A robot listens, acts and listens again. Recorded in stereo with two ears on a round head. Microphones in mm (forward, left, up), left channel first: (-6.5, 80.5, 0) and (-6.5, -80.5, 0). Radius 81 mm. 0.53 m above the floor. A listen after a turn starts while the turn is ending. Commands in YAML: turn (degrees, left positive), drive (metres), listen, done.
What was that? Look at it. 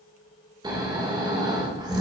turn: -25
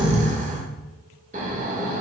turn: -125
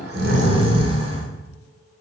turn: -35
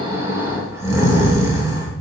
turn: -15
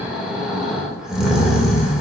done: "Found it: snoring, straight ahead."